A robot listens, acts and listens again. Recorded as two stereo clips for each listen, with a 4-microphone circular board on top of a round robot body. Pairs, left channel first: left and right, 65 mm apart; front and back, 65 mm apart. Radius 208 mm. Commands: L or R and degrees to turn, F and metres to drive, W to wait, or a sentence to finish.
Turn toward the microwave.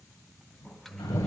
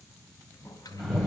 Facing the microwave, 1 to 2 m away.